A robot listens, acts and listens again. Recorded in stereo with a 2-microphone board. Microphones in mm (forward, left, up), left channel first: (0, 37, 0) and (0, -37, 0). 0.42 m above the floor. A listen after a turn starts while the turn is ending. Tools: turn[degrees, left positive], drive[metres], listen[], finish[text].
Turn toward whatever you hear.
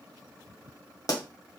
Thought: The pop: about 50° left or 130° left.
Action: turn[50]
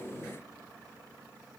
Action: listen[]
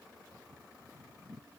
Action: finish[I heard a pop, but can't make it out now. It was about straight ahead or 80° left.]